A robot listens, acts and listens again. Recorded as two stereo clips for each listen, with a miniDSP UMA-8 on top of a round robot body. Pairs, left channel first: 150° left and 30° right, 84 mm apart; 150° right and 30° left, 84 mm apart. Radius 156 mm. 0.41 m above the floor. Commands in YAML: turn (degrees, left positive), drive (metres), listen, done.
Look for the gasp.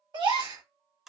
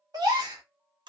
turn: -10
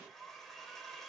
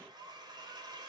done: "I heard a gasp from this way, but can't make it out now."